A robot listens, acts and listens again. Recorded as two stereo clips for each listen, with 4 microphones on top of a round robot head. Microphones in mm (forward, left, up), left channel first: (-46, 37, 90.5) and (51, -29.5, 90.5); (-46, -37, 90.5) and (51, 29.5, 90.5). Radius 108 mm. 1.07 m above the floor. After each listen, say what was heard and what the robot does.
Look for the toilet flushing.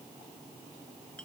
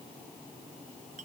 Keep listening.
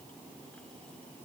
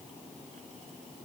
Keep listening.
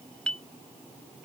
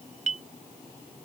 I can't make out a toilet flushing, only a clink.